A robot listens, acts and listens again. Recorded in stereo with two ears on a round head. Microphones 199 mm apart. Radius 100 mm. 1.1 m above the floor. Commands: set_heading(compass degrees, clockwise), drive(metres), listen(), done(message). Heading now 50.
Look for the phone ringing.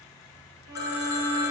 set_heading(5)
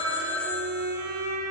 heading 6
done("Facing the phone ringing.")